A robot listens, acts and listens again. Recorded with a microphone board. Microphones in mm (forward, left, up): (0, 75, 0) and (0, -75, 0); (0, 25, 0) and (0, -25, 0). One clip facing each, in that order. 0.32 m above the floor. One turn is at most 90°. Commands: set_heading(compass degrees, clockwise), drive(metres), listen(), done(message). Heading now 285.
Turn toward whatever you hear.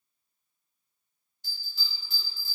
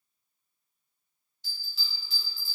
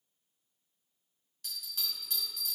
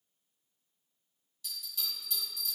set_heading(235)
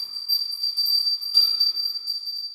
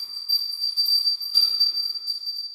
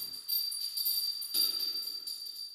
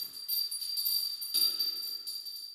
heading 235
set_heading(225)
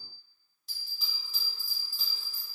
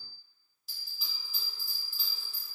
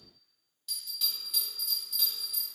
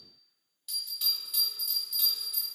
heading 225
done("Found it: a bell, straight ahead.")